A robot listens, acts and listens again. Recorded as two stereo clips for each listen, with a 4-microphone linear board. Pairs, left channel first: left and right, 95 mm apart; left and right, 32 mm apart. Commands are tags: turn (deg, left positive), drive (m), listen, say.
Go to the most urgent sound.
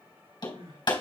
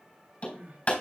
<turn deg="-90"/>
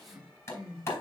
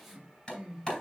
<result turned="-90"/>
<drive m="1.0"/>
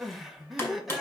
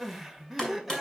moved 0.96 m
<drive m="1.0"/>
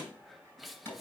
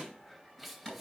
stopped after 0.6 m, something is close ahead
<listen/>
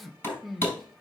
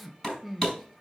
<say>I am next to the crying.</say>